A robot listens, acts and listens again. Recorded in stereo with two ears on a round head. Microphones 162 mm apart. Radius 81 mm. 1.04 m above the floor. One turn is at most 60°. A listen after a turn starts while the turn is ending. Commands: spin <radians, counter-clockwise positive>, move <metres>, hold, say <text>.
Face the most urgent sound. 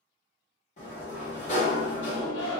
spin 1.05
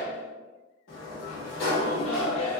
spin 0.61
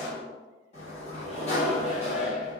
say Found it: a shout, straight ahead.